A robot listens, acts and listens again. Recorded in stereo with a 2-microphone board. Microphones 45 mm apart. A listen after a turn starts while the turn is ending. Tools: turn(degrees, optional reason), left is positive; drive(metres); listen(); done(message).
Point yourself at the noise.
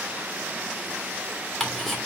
turn(degrees=30)
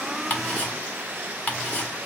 turn(degrees=145, reason="So it is at 145° left.")
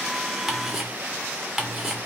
turn(degrees=-10, reason="The ticking is now 10° right.")
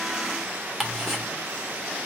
done("Found it: ticking, straight ahead, 1 to 2 m away.")